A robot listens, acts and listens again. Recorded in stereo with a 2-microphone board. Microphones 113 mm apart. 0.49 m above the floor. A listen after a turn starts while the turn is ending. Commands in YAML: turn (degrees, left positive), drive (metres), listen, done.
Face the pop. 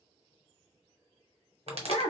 turn: -65
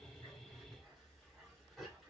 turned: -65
listen: true
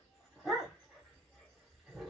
done: "I heard a pop, but can't make it out now. It was about straight ahead or 50° right."